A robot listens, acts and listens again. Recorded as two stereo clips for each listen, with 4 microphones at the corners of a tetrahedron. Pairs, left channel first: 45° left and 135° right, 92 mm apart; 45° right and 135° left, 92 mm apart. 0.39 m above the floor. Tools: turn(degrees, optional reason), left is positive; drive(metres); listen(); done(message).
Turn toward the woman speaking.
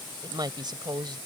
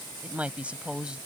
turn(degrees=-150, reason="The woman speaking: 150° right.")
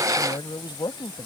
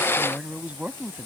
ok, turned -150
turn(degrees=65, reason="The woman speaking is now 65° left.")
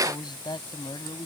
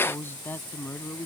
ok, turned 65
turn(degrees=20, reason="The woman speaking is now 20° left.")
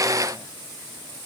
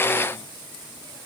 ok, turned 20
listen()
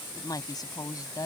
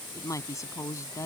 done("Facing the woman speaking.")